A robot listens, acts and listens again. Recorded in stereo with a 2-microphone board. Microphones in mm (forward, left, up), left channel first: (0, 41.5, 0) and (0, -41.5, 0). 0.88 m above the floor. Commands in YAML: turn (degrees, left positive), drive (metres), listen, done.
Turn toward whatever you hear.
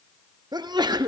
turn: -55
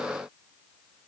listen: true
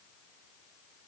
done: "I heard a sneeze, but can't make it out now. It was about straight ahead or 70° right."